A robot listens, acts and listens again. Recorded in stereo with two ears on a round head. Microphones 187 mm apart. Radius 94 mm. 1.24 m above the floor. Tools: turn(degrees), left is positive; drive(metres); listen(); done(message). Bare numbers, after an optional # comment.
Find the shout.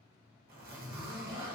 listen()
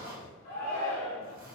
turn(90)
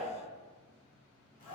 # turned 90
done("Facing the shout, 1 to 2 m away.")